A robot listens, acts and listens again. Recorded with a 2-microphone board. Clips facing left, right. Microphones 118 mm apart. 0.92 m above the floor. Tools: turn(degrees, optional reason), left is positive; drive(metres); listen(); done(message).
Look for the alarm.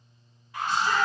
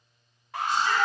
turn(degrees=-75, reason="The alarm: about 75° right or 105° right.")
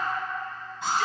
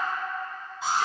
done("Facing the alarm.")